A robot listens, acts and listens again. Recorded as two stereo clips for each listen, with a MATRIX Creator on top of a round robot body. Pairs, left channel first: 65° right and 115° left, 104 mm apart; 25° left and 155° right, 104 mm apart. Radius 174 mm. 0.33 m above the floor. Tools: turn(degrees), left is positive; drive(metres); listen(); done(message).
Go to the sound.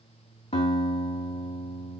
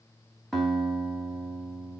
turn(degrees=-65)
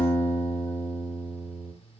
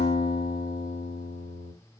drive(metres=1.0)
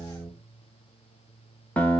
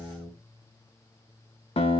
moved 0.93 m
turn(degrees=10)
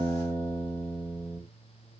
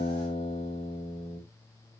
drive(metres=1.0)
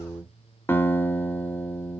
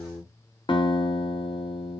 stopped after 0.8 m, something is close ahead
done("Arrived at the guitar, straight ahead.")